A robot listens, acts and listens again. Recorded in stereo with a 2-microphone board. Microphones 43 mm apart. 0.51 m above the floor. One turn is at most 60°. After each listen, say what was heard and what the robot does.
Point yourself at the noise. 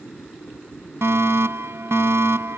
The fire alarm: about 70° right or 110° right. Turn 60° right.
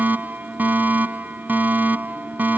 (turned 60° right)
So it is at 45° right. Turn 45° right.
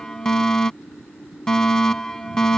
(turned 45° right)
The fire alarm is now 10° left. Turn 10° left.
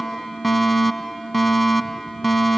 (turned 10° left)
Found it: a fire alarm, straight ahead.